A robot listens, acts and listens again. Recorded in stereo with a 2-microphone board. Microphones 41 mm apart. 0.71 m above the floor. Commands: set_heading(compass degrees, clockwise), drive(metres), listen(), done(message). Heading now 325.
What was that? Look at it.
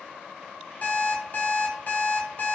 set_heading(285)
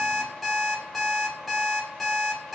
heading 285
done("Found it: an alarm clock, straight ahead.")